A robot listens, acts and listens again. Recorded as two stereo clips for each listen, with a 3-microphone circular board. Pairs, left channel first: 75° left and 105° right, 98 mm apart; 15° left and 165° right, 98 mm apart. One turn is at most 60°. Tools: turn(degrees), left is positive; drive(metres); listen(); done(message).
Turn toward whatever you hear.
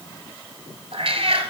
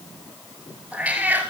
turn(degrees=-60)
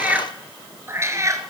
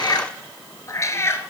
turn(degrees=-50)
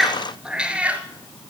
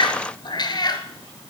turn(degrees=-30)
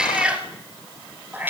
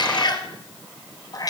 turn(degrees=-35)
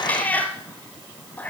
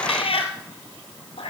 done("Found it: a cat meowing, straight ahead, 1 to 2 m away.")